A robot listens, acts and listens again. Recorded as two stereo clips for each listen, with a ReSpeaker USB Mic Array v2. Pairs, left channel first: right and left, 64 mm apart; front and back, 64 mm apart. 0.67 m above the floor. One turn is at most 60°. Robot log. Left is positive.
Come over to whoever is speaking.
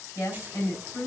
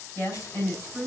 note: The woman speaking: 45° right.
cmd yaw -45
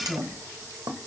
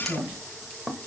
note: The woman speaking is now 10° left.
cmd yaw +10
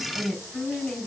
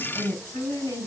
cmd fwd 1.0
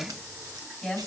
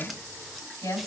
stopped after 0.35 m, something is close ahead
end: Something is in my way. I am facing the woman speaking but have not reached it.